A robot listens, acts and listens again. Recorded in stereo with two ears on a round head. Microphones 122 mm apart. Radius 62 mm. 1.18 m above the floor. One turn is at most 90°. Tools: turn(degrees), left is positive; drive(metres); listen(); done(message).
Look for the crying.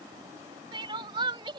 turn(degrees=-35)
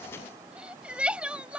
turn(degrees=-10)
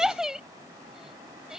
done("Found it: crying, straight ahead.")